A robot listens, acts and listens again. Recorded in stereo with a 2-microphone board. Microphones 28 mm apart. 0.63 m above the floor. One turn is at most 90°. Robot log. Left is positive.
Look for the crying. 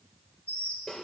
cmd idle
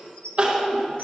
note: The crying: about 45° right or 135° right.
cmd yaw -45
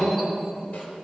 cmd idle
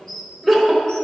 end: Found it: crying, straight ahead.